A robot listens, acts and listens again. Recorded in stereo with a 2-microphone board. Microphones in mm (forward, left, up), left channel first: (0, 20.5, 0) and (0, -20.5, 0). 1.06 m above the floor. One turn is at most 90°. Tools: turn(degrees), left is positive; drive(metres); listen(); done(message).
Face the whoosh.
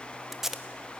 listen()
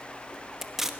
listen()
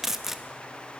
done("I can't make out a whoosh, only tape being pulled.")